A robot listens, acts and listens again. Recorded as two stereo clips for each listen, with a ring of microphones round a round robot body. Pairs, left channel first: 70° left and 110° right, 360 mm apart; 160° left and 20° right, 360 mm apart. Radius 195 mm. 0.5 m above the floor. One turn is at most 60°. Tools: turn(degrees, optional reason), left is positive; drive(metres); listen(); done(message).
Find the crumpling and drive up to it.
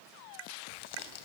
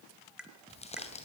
turn(degrees=60, reason="The crumpling: 85° left.")
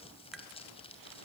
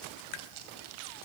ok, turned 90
drive(metres=1.0)
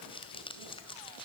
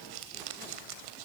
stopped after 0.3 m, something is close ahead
turn(degrees=-10, reason="The crumpling is now 10° right.")
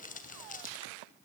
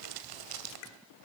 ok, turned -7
done("Something is in my way. I am facing the crumpling but have not reached it.")